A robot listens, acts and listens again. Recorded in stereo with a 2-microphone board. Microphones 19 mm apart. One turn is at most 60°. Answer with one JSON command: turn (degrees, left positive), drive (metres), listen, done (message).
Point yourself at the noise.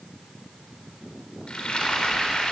{"turn": 60}
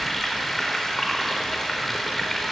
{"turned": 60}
{"turn": 15}
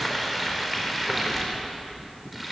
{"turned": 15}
{"done": "Facing the frying."}